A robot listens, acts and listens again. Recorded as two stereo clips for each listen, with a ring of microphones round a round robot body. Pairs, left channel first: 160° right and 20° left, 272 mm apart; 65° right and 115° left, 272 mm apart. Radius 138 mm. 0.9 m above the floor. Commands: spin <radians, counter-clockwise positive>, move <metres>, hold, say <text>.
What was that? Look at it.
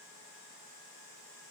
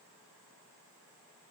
hold
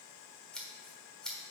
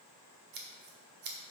spin 2.01
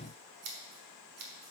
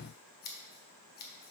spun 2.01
spin -0.17
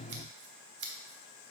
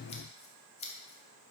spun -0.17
say Facing the scissors, 1 to 2 m away.